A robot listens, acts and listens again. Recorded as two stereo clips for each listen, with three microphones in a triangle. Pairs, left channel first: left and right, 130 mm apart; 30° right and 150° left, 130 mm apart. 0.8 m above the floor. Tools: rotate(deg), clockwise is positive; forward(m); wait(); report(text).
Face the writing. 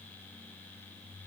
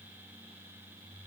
wait()
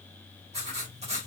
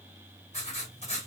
rotate(60)
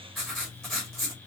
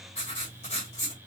report("Found it: writing, straight ahead.")